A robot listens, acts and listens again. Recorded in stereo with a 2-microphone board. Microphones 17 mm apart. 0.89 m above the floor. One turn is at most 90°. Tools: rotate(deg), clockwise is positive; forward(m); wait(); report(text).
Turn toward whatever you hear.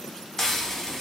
rotate(-20)
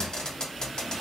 rotate(-90)
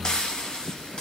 rotate(-60)
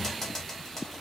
rotate(-20)
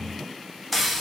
report("Facing the frying, 1 to 2 m away.")